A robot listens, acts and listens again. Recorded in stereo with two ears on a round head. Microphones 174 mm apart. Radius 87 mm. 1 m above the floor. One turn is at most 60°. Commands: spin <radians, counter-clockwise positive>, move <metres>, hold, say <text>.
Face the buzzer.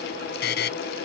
spin 1.05
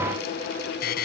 spin 0.96
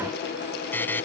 spin 0.17
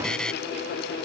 say Found it: a buzzer, straight ahead.